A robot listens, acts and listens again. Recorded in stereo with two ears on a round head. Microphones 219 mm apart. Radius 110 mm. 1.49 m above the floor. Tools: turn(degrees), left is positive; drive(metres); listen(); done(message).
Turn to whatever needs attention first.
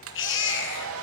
turn(degrees=50)
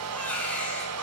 done("Found it: a baby crying, straight ahead, over 4 m away.")